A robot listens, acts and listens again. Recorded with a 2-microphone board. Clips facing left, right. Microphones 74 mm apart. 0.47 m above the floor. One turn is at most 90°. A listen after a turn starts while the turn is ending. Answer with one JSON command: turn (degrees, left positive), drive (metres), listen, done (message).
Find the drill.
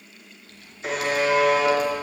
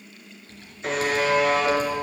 {"listen": true}
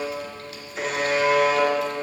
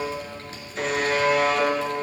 {"listen": true}
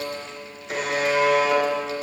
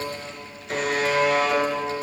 {"done": "I can't make out a drill to turn to."}